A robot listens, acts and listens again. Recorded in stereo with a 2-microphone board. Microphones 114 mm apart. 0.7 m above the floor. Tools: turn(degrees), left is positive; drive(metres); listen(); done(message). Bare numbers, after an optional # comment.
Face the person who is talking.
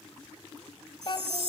# The child speaking: about 45° left or 135° left.
turn(45)
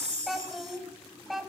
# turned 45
done("Facing the child speaking.")